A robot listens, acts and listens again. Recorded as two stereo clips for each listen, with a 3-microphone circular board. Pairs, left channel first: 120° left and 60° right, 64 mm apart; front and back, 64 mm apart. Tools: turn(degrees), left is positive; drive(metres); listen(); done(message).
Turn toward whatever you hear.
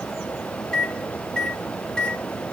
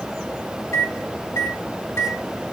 turn(degrees=45)
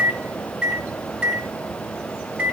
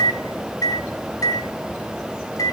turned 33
turn(degrees=10)
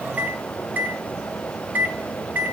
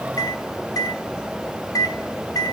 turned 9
done("Facing the microwave.")